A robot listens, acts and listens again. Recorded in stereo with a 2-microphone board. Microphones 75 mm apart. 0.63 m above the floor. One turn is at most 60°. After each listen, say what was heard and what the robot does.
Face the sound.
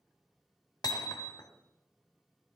The hammering: about 60° left or 120° left. Turn 60° left.
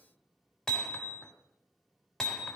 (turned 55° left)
Facing the hammering.